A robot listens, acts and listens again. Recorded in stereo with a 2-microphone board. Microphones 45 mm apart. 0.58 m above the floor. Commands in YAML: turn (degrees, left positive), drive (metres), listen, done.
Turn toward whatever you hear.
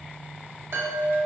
turn: -70
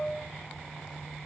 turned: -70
done: "Facing the chime."